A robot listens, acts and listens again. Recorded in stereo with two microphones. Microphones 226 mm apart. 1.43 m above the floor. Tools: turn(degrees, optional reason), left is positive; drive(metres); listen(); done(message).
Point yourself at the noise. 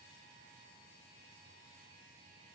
listen()
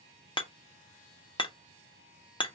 turn(degrees=20, reason="The hammering: about 20° left or 160° left.")
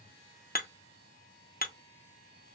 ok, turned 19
turn(degrees=140, reason="So it is at 140° left.")
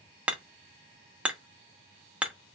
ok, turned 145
done("Found it: hammering, straight ahead.")